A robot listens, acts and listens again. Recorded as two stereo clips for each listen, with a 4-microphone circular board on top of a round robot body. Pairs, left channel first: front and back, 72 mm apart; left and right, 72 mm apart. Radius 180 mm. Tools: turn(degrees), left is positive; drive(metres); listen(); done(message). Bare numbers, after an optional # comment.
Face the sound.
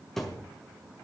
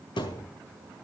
# The thud: 85° left.
turn(85)
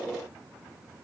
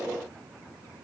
done("I heard a thud from this way, but can't make it out now.")